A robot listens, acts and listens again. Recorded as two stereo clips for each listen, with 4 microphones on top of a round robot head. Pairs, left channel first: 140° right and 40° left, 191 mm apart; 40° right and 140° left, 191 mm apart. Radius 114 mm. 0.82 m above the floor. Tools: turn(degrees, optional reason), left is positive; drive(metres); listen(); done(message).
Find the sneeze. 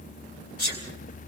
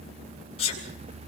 turn(degrees=-100, reason="The sneeze: 100° right.")
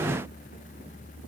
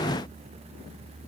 done("Facing where the sneeze came from. I can't hear it now.")